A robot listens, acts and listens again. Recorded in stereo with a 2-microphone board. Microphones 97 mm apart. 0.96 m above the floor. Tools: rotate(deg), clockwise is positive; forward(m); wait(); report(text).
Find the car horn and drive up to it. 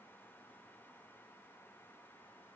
wait()
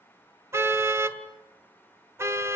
rotate(25)
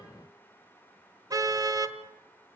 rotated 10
rotate(35)
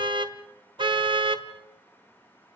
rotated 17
rotate(130)
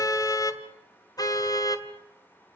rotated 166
rotate(-35)
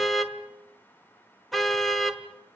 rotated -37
forward(1.0)
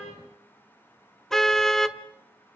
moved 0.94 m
forward(1.0)
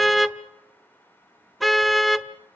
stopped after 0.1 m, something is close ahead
report("Arrived at the car horn, straight ahead.")